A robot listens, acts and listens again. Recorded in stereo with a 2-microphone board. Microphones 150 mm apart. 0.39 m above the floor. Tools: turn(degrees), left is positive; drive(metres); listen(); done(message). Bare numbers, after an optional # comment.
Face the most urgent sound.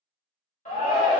# The shout: about 60° left or 120° left.
turn(60)
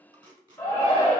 # So it is at 20° left.
turn(20)
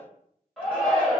done("Found it: a shout, straight ahead.")